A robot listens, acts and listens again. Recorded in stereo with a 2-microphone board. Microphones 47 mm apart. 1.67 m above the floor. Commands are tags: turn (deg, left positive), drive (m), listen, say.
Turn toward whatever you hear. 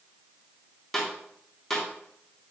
<turn deg="30"/>
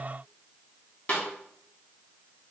<turn deg="145"/>
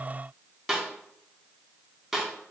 <say>Found it: a snare drum, straight ahead.</say>